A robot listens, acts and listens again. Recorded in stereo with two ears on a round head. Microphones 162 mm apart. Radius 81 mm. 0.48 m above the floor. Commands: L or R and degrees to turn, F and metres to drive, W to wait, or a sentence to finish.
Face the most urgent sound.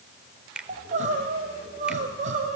R40
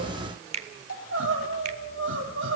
R100
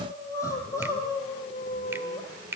L20
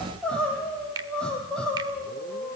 Found it: crying, straight ahead, over 4 m away.